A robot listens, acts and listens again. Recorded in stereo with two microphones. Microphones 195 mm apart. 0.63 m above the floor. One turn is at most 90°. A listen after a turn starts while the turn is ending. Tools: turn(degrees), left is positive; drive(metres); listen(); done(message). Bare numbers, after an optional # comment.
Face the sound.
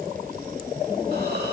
listen()
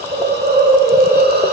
# The hiss: about 50° right or 130° right.
turn(-50)
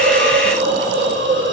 # So it is at 80° right.
turn(-80)
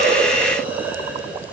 listen()
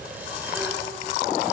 listen()
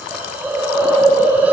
# The hiss is now 10° right.
turn(-10)
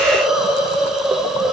done("Found it: a hiss, straight ahead.")